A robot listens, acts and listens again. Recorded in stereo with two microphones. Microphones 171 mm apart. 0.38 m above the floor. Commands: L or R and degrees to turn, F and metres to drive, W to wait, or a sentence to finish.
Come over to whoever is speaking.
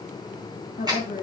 L50
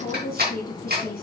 L75
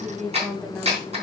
F1.0
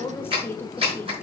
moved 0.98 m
L15
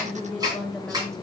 F1.0
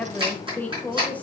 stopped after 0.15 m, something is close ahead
L15
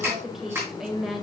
Arrived at the woman speaking, straight ahead.